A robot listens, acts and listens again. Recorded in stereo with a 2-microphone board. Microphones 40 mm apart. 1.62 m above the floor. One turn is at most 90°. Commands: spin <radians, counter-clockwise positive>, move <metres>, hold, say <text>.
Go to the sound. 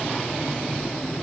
hold
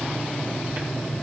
hold
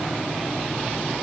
say I can't make out anything to turn to.